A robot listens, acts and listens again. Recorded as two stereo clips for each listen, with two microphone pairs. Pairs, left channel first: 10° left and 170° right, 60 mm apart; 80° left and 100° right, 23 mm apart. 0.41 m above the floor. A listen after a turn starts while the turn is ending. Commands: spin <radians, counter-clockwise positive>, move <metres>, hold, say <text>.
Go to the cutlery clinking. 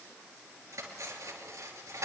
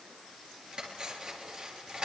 spin -2.44
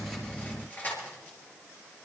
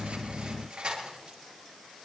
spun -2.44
spin -0.96
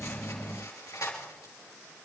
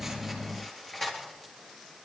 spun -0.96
move 1.0
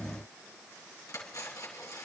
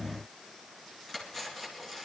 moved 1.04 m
move 1.0
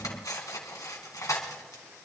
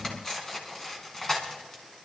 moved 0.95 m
spin 0.17
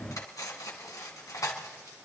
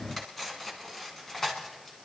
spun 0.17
move 1.0
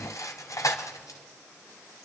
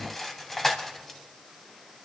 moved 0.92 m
move 1.0
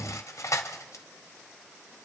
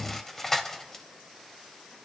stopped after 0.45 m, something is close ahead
say Arrived at the cutlery clinking, straight ahead.